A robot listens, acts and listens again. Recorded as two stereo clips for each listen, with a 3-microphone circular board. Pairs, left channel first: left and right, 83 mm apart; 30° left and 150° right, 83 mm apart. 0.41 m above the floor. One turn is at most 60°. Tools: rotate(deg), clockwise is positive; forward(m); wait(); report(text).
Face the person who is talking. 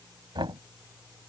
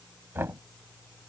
wait()
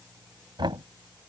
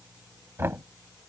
wait()
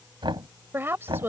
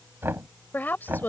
rotate(35)
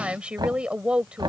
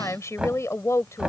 rotate(15)
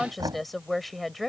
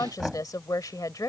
report("Facing the woman speaking.")